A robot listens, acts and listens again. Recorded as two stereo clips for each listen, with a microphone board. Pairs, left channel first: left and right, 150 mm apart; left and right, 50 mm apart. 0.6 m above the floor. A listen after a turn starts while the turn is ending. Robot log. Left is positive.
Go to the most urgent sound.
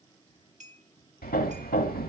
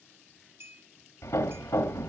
cmd idle
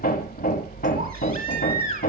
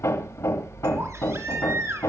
cmd yaw -90
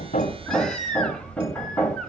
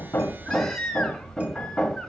cmd fwd 1.0
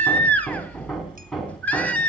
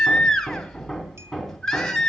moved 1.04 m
note: The baby crying is now 10° left.
cmd yaw +10
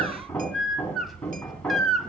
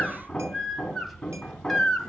cmd fwd 1.0
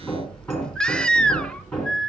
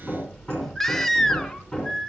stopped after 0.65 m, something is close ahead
end: I am next to the baby crying.